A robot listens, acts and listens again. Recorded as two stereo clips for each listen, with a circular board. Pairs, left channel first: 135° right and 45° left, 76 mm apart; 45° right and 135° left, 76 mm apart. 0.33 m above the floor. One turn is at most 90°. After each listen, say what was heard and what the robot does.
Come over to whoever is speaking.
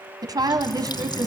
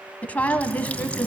The woman speaking: 25° left. Turn 25° left.
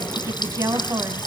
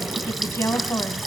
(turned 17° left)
Drive 1.0 m forward.
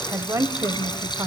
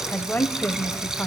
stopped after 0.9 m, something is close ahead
The woman speaking is now 15° left. Turn 15° left.
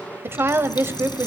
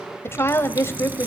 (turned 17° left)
I am next to the woman speaking.